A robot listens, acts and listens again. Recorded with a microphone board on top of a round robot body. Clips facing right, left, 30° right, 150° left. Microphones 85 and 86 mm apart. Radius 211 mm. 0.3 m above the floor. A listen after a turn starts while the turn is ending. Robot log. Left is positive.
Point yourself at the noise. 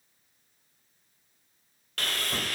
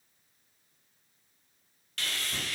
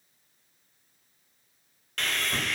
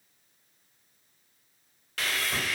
note: The sawing: 125° right.
cmd yaw -125
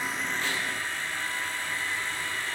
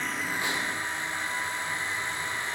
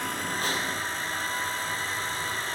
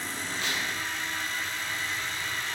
note: The sawing is now 20° left.
cmd yaw +20
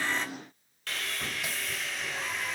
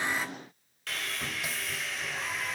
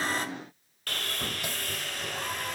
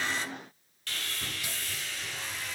end: Found it: sawing, straight ahead.